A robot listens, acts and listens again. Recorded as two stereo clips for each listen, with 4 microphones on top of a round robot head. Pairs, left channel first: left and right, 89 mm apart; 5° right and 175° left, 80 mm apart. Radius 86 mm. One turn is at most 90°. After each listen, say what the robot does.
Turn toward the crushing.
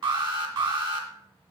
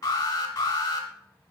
Keep listening.
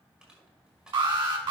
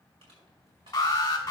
Turn 90° right.
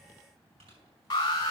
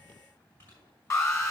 Turn 70° right.
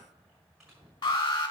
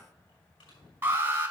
Found it: crushing, straight ahead, over 4 m away.